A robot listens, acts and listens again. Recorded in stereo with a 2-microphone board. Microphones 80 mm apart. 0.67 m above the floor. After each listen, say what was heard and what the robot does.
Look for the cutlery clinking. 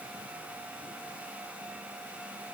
Keep listening.
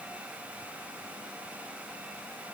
Keep listening.
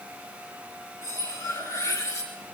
The cutlery clinking: about 45° left or 135° left. Turn 45° left.
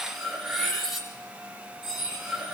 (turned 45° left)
Found it: cutlery clinking, straight ahead.